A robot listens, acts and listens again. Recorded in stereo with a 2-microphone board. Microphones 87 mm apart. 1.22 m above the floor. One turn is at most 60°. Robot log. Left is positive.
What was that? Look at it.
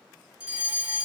note: The fire alarm: about 15° right or 165° right.
cmd yaw -15
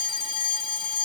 end: Facing the fire alarm.